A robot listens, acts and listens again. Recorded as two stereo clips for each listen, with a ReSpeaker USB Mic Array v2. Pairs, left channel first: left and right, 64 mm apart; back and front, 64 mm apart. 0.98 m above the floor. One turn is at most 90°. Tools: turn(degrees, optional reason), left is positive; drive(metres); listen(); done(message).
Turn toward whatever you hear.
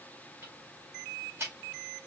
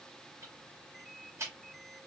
turn(degrees=-45, reason="The ticking: 45° right.")
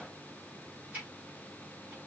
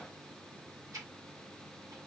turn(degrees=-35, reason="The ticking is now 35° right.")
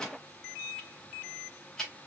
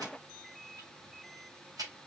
done("Found it: ticking, straight ahead.")